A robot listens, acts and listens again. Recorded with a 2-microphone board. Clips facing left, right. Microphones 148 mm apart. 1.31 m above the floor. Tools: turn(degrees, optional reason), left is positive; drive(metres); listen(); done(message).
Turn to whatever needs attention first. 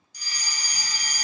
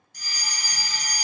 turn(degrees=-55, reason="The fire alarm: about 55° right or 125° right.")
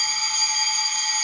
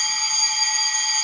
turn(degrees=-15, reason="So it is at 15° right.")
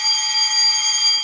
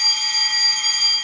done("Facing the fire alarm, 1 to 2 m away.")